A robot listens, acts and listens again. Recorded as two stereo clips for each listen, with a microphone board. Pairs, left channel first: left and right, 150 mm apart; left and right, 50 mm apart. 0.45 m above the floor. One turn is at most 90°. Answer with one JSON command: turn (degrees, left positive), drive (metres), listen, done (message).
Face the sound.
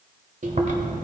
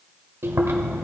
{"turn": -55}
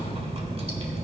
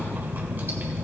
{"turn": -50}
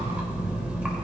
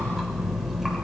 {"turn": -10}
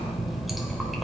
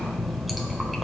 {"done": "Facing the chewing."}